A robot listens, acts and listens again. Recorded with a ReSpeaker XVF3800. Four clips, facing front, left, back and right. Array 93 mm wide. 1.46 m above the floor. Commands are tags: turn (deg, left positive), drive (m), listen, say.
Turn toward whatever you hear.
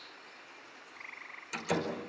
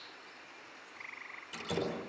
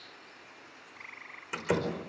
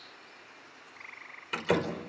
<turn deg="-120"/>
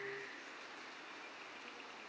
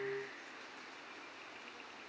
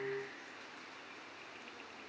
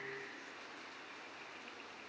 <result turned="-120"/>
<say>I heard a door slam from this way, but can't make it out now.</say>